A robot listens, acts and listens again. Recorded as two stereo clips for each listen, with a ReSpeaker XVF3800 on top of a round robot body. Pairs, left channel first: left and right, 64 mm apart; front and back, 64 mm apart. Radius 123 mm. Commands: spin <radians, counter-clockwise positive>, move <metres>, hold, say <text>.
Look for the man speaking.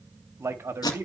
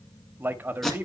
spin -2.27
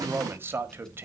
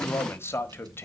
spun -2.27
spin -0.79
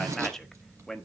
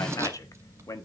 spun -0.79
say Found it: a man speaking, straight ahead.